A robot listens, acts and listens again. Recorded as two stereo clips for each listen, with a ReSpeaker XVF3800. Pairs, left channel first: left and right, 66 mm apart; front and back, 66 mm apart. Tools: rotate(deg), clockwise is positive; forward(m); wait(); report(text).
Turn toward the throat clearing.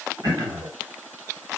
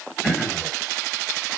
rotate(75)
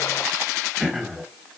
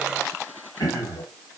report("Found it: throat clearing, straight ahead, 1 to 2 m away.")